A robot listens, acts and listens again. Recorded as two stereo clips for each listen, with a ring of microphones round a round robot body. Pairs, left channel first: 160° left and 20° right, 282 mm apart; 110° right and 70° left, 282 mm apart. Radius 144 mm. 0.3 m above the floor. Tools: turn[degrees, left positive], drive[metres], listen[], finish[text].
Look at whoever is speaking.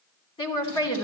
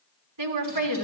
Thought: The woman speaking: 85° left.
Action: turn[85]
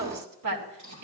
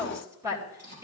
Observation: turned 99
Thought: The woman speaking is now 10° right.
Action: turn[-10]
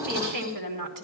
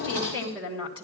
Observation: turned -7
Action: finish[Found it: a woman speaking, straight ahead, 2 to 4 m away.]